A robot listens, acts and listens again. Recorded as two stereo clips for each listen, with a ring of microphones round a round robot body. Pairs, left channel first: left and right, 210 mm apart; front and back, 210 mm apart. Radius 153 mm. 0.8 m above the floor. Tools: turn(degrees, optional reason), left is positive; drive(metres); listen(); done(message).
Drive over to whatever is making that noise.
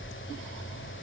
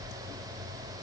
listen()
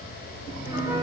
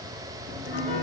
turn(degrees=-15, reason="The piano: 15° right.")
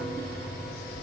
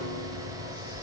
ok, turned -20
drive(metres=1.0)
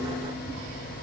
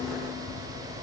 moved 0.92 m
listen()
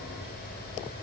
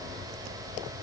listen()
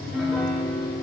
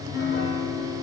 drive(metres=1.0)
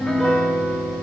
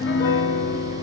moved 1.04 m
drive(metres=1.0)
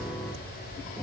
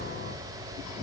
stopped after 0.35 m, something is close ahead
listen()
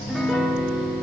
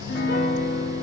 done("I am next to the piano.")